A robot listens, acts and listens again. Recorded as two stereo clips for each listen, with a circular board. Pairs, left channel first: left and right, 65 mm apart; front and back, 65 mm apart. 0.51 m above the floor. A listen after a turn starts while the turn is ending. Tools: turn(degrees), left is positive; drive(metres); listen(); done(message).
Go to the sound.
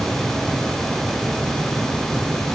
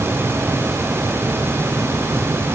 listen()
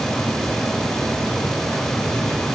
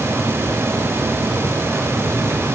listen()
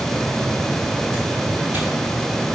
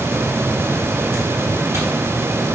done("I can't make out anything.")